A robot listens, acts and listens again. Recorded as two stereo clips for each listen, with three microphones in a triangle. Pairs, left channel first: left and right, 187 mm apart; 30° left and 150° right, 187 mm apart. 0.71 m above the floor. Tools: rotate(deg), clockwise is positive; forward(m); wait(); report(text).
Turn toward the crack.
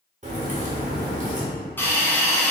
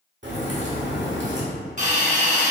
rotate(140)
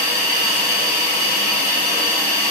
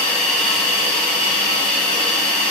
report("I heard a crack from this way, but can't make it out now.")